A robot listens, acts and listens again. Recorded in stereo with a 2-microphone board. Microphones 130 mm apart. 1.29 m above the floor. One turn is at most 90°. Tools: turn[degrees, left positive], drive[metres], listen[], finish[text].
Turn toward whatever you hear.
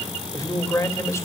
Thought: The man speaking: about 20° left or 160° left.
Action: turn[20]
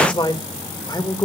Thought: The man speaking: about 30° left or 150° left.
Action: turn[30]
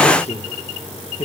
Thought: So it is at 135° left.
Action: turn[90]
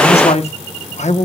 Thought: The man speaking is now 65° left.
Action: turn[65]
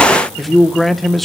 Action: finish[Facing the man speaking, 1 to 2 m away.]